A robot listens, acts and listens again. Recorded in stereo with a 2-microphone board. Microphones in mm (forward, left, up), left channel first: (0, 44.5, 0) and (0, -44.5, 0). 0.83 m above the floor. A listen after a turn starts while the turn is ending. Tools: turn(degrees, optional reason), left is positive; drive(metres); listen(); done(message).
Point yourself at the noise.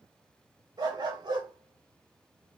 turn(degrees=-55, reason="The dog barking: about 55° right or 125° right.")
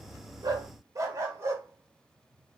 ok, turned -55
turn(degrees=-30, reason="So it is at 30° right.")
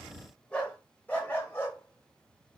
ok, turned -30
turn(degrees=25, reason="The dog barking is now 25° left.")
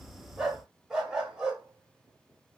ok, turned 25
turn(degrees=-10, reason="The dog barking is now 10° right.")
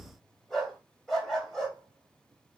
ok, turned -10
done("Found it: a dog barking, straight ahead, 1 to 2 m away.")